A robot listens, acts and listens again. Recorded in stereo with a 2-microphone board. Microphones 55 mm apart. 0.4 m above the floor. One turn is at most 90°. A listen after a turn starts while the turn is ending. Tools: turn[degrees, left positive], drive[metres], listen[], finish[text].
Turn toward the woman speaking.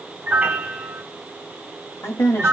Thought: The woman speaking: about 55° left or 125° left.
Action: turn[55]
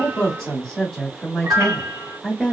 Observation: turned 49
Action: finish[Facing the woman speaking, 1 to 2 m away.]